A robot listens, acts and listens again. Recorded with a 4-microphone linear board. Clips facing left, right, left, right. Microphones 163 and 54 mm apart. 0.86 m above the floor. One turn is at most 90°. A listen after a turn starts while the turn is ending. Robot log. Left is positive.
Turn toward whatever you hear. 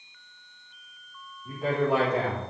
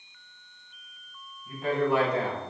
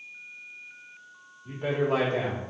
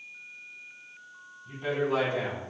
cmd yaw +90
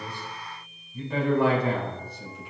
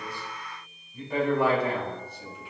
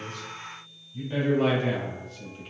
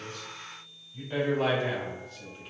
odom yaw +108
note: So it is at 10° right.
cmd yaw -10
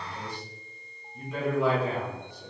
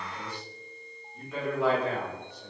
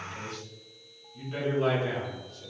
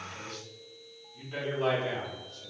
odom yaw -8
end: Found it: a man speaking, straight ahead, 2 to 4 m away.